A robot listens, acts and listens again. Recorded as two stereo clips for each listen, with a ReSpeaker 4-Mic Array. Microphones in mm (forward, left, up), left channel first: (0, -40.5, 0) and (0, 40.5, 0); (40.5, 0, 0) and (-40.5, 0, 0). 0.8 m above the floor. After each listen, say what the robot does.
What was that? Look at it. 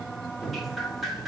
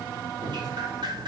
Turn 180° left.
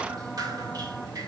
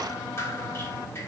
Turn 55° left.
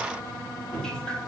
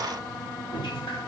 Turn 10° right.
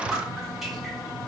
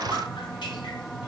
Found it: dripping, straight ahead.